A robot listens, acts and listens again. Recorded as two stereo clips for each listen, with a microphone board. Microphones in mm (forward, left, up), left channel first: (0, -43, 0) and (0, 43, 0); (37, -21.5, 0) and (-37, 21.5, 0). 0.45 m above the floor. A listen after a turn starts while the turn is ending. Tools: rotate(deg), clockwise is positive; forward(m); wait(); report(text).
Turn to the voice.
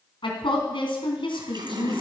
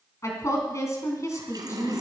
rotate(85)
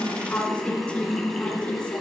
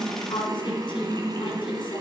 wait()
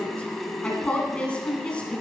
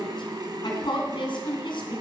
rotate(15)
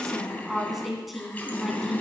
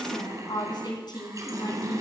report("Facing the woman speaking, 2 to 4 m away.")